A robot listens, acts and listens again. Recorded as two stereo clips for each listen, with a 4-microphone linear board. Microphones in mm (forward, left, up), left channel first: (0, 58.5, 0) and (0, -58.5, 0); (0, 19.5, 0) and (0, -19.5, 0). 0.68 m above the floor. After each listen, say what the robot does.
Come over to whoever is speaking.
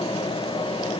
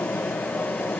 Keep listening.
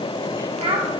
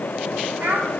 Turn 60° right.
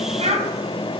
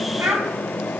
Turn 55° right.
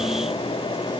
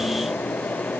Keep listening.
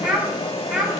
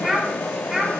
Drive 1.0 m forward.
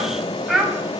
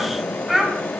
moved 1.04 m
Drive 1.0 m forward.
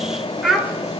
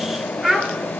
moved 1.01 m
Drive 1.0 m forward.
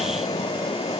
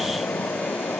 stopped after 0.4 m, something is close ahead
Keep listening.
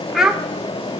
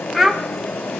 Arrived at the child speaking, straight ahead.